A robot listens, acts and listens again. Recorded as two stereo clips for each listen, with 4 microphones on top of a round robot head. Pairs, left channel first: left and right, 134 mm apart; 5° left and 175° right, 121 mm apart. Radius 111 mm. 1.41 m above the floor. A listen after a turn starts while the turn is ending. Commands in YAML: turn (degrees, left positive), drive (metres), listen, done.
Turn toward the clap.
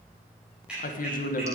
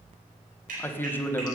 turn: -175
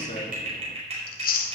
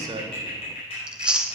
turn: -50
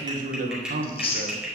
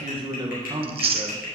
done: "Facing the clap."